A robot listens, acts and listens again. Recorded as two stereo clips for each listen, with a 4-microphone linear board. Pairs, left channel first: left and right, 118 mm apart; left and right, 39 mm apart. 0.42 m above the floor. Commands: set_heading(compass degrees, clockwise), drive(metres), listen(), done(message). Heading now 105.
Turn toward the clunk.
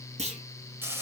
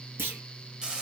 set_heading(180)
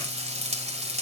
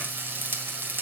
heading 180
listen()
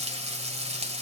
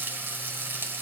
done("I heard a clunk, but can't make it out now. It was about straight ahead or 30° right.")